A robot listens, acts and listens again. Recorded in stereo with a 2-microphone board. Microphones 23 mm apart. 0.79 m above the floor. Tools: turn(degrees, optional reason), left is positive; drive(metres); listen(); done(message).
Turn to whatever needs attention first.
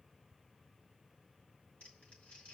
listen()
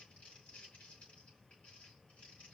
listen()
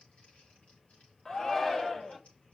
turn(degrees=25, reason="The shout: about 25° left or 155° left.")
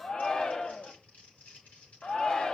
turn(degrees=125, reason="So it is at 125° left.")
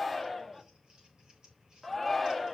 done("Found it: a shout, straight ahead, 1 to 2 m away.")